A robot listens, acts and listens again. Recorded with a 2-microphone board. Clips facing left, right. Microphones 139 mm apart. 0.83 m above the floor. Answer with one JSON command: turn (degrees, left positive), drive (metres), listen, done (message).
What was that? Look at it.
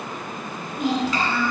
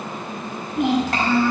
{"turn": -90}
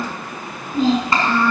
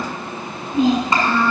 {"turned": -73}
{"turn": -20}
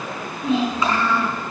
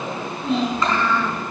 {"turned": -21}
{"done": "Found it: a child speaking, straight ahead."}